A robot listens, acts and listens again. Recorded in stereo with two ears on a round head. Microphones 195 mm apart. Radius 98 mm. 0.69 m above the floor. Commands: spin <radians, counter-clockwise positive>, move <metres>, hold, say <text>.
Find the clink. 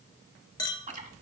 spin 0.26
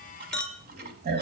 say Found it: a clink, straight ahead, under 1 m away.